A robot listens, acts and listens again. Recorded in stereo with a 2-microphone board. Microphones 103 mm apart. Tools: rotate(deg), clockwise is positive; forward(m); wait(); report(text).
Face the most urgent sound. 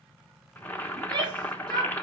rotate(45)
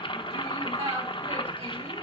rotate(90)
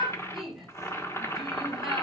report("Facing the shout, 2 to 4 m away.")